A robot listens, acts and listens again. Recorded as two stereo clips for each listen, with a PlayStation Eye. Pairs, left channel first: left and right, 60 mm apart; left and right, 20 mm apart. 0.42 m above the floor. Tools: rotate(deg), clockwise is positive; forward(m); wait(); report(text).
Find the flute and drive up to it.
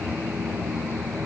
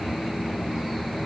wait()
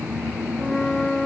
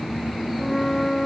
rotate(-20)
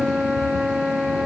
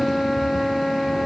forward(1.0)
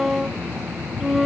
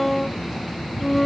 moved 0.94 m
forward(1.0)
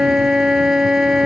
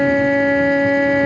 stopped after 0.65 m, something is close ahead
report("Arrived at the flute, straight ahead.")